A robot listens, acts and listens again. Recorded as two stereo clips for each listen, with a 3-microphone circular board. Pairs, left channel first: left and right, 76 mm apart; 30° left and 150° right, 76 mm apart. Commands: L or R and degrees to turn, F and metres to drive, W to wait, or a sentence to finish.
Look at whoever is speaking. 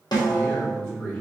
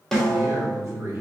L165
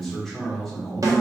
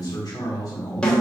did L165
Facing the man speaking.